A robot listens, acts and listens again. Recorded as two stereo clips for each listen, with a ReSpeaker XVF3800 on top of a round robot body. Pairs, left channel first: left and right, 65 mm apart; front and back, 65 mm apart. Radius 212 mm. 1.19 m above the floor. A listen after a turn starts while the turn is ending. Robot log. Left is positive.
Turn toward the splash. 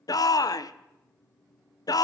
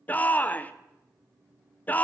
cmd idle
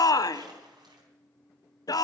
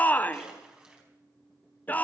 note: The splash: 105° right.
cmd yaw -105
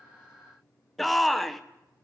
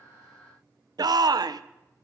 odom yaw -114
end: I heard a splash from this way, but can't make it out now.